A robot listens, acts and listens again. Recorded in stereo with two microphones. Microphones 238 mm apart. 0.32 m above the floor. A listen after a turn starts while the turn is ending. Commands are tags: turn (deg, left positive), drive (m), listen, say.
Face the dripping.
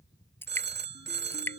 <turn deg="30"/>
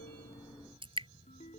<turn deg="-20"/>
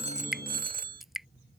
<say>Facing the dripping.</say>